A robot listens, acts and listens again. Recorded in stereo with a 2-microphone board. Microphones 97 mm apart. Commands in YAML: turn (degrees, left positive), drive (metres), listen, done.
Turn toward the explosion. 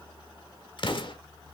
turn: 60
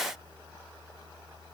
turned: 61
listen: true
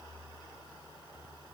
done: "I heard an explosion, but can't make it out now. It was about 5° right or 60° left."